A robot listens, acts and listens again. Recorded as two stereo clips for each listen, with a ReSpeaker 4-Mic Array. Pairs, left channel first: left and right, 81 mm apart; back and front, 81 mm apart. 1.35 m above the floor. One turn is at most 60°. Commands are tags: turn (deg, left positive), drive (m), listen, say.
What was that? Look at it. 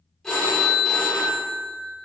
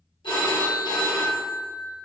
<turn deg="60"/>
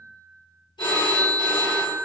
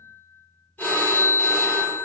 <turn deg="60"/>
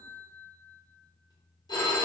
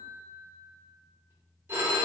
<turn deg="60"/>
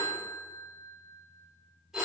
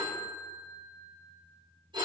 <say>Found it: a phone ringing, straight ahead, under 1 m away.</say>